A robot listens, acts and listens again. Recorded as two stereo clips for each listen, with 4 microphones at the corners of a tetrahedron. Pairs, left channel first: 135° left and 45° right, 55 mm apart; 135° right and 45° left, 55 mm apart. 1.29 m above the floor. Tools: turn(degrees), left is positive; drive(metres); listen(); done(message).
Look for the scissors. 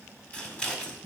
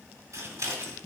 turn(degrees=70)
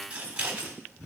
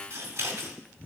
turn(degrees=20)
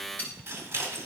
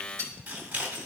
done("Found it: scissors, straight ahead.")